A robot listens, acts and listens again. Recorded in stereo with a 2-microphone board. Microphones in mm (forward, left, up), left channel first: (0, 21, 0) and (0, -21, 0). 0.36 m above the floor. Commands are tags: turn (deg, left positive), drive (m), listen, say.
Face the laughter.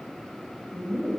<turn deg="15"/>
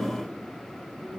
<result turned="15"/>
<turn deg="-20"/>
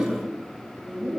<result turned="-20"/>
<turn deg="-40"/>
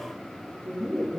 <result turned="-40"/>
<turn deg="-25"/>
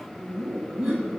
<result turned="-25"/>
<turn deg="-10"/>
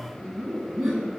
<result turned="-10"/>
<say>Facing the laughter.</say>